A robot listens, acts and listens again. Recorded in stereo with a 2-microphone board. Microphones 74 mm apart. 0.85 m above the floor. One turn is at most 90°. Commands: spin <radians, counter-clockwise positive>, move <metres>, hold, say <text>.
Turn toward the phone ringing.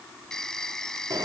spin 0.52
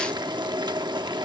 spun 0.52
hold
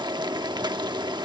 hold
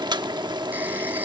say I heard a phone ringing, but can't make it out now. It was about 20° right or 140° left.